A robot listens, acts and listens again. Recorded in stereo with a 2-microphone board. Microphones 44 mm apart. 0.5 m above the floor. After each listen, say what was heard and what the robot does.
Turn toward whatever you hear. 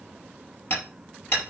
The hammering: about 75° left or 105° left. Turn 75° left.
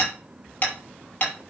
So it is at 30° left. Turn 30° left.
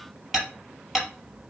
Facing the hammering.